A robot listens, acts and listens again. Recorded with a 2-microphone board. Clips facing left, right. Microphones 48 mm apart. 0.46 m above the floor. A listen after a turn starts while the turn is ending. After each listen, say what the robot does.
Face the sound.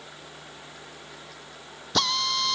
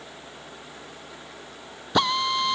Turn 20° right.
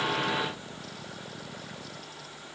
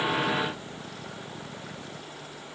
Keep listening.
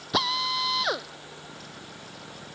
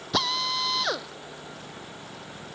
Found it: a drill, straight ahead.